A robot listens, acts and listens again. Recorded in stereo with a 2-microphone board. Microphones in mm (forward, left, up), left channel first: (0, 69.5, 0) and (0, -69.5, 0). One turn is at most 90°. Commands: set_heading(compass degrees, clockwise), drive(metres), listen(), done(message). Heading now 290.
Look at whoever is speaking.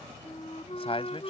set_heading(245)
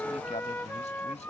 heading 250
listen()
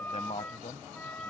set_heading(165)
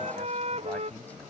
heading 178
set_heading(163)
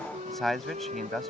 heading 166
done("Found it: a man speaking, straight ahead.")